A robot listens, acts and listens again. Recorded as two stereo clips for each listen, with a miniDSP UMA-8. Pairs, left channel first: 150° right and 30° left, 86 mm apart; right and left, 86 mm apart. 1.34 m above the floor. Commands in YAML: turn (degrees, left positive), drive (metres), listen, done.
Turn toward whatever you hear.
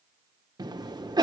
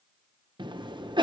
turn: 65
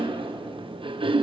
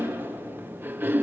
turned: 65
turn: 25
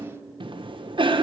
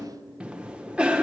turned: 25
turn: 15
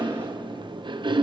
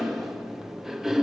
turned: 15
done: "Found it: a cough, straight ahead."